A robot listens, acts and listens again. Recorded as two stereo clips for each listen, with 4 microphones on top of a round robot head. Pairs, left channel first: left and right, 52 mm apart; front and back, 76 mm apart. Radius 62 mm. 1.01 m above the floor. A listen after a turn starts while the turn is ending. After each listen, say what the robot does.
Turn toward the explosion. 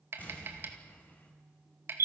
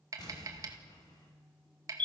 Turn 35° left.
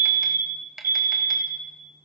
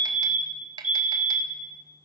I heard an explosion from this way, but can't make it out now.